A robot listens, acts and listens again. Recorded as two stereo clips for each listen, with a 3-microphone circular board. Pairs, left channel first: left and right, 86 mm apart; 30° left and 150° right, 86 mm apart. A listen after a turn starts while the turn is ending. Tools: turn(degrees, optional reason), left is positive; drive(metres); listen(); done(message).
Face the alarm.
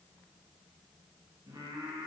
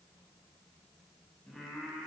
listen()
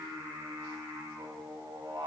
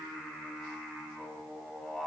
listen()
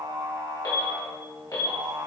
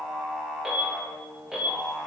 turn(degrees=130, reason="The alarm: 130° left.")
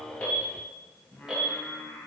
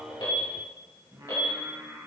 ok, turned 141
turn(degrees=-10, reason="The alarm is now 10° right.")
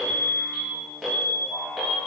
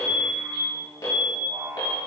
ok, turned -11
done("Facing the alarm, 1 to 2 m away.")